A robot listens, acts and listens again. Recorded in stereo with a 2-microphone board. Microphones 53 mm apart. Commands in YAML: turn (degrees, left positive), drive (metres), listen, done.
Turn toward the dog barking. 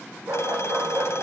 turn: -60
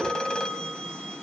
listen: true
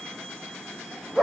done: "Facing the dog barking."